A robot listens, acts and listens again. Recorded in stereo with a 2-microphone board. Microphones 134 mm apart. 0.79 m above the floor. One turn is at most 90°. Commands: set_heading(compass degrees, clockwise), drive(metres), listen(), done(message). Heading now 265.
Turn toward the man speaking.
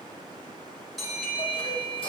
listen()
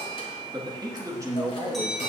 set_heading(285)
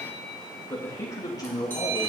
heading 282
set_heading(252)
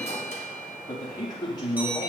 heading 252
set_heading(222)
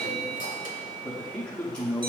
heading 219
done("Found it: a man speaking, straight ahead, 1 to 2 m away.")